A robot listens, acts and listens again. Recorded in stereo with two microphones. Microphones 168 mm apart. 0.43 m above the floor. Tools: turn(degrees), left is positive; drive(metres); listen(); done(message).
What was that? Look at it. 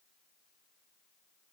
listen()
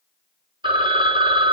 turn(degrees=-30)
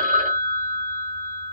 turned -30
turn(degrees=-120)
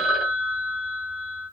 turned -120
done("Found it: a phone ringing, straight ahead, 1 to 2 m away.")